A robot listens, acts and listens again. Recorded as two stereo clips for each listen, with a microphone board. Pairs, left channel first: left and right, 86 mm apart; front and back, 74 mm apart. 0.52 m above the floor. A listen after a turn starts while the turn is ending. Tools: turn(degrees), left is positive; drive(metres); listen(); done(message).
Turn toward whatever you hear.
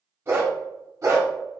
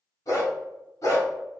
turn(degrees=-45)
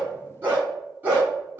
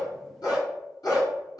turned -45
turn(degrees=-30)
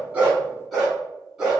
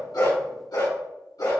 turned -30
done("Found it: a dog barking, straight ahead.")